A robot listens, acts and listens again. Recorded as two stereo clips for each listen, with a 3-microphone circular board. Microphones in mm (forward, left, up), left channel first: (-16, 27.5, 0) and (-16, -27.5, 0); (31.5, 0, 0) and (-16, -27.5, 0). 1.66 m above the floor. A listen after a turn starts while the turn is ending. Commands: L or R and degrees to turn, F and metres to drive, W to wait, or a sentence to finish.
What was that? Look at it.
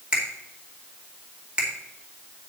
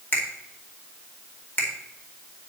R25
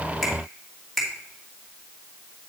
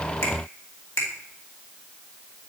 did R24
Found it: a finger snap, straight ahead, 2 to 4 m away.